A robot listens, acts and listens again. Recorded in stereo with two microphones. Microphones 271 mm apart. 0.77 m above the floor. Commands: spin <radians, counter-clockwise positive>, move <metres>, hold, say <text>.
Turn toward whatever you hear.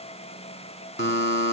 spin 0.79
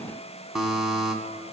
say Facing the buzzer.